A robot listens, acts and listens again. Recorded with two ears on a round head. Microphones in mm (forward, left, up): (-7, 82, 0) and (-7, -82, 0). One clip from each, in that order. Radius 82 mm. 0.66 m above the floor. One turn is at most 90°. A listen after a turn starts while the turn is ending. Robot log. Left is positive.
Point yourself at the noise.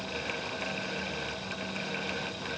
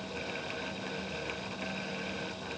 cmd idle
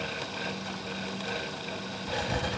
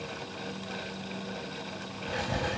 note: The writing: about 20° left or 160° left.
cmd yaw +20
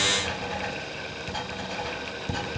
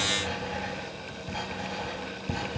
note: So it is at 135° left.
cmd yaw +90
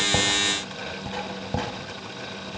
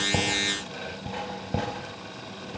note: The writing is now 30° left.
cmd yaw +30
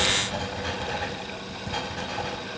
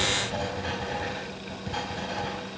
note: The writing is now 20° left.
cmd yaw +20
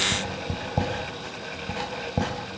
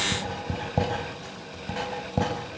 end: Facing the writing, over 4 m away.